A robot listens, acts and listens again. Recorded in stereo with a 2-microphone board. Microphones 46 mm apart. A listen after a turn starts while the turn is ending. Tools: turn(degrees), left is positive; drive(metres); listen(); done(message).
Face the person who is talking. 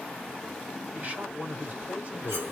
turn(degrees=-40)
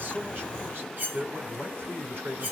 turn(degrees=-85)
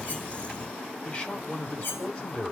turn(degrees=25)
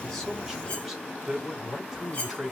turn(degrees=-10)
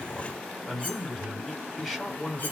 done("Found it: a man speaking, straight ahead, 1 to 2 m away.")